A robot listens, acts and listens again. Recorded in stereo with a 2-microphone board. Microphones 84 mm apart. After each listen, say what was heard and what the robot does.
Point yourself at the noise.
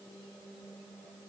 Keep listening.
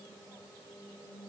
Keep listening.
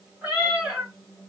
Turn 30° right.
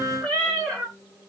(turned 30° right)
So it is at 15° left. Turn 15° left.
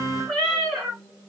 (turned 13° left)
Found it: a cat meowing, straight ahead, 1 to 2 m away.